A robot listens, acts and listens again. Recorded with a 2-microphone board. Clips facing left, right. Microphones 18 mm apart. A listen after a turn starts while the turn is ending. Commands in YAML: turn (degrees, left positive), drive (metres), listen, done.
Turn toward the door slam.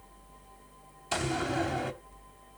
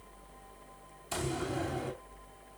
turn: 35
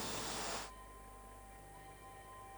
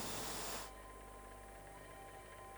listen: true
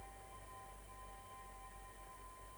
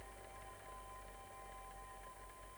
done: "I heard a door slam, but can't make it out now. It was about straight ahead or 110° left."